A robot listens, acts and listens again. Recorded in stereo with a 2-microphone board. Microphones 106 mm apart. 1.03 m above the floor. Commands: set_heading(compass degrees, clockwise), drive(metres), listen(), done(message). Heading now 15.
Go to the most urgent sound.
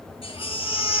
set_heading(310)
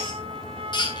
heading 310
set_heading(260)
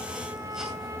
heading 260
listen()
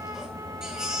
drive(1.0)
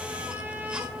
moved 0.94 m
listen()
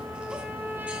listen()
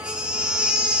set_heading(270)
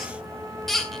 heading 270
drive(1.0)
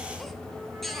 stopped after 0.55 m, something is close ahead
listen()
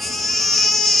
done("I am next to the baby crying.")